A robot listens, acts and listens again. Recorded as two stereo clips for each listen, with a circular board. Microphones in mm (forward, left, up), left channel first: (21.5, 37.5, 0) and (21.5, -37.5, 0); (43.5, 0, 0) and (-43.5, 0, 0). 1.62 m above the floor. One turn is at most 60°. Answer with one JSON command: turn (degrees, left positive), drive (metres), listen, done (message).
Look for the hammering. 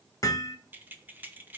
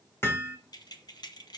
{"turn": 60}
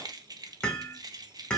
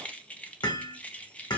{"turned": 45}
{"turn": 15}
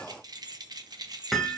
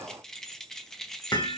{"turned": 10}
{"done": "Facing the hammering."}